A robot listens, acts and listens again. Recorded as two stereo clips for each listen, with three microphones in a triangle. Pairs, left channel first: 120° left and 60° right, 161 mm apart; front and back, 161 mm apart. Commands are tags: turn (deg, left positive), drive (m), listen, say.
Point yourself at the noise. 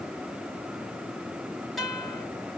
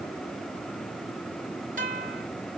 <turn deg="-150"/>
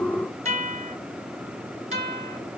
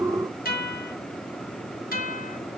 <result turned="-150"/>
<turn deg="-15"/>
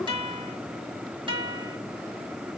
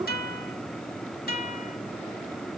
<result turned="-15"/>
<say>Facing the guitar, 1 to 2 m away.</say>